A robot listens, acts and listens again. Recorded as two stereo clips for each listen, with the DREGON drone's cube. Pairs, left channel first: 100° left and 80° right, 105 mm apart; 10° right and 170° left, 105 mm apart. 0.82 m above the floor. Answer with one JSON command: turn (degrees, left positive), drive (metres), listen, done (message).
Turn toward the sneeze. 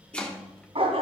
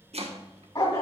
{"listen": true}
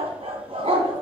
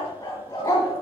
{"listen": true}
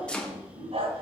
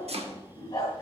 {"done": "I can't make out a sneeze to turn to."}